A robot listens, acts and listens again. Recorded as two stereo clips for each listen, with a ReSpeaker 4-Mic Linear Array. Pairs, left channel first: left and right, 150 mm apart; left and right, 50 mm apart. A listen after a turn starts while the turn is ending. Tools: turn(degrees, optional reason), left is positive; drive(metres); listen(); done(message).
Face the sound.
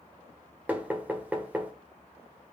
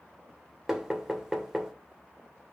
turn(degrees=-30)
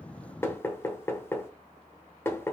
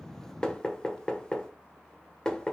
turn(degrees=20, reason="So it is at 20° left.")
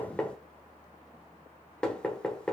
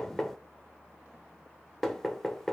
done("Found it: knocking, straight ahead.")